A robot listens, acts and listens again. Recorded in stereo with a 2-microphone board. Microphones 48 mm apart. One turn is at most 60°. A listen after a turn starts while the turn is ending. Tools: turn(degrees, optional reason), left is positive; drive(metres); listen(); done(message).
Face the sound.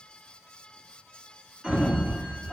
turn(degrees=-30)
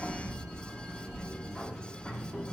turn(degrees=25, reason="So it is at 25° left.")
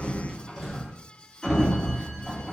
done("Facing the sliding door, 1 to 2 m away.")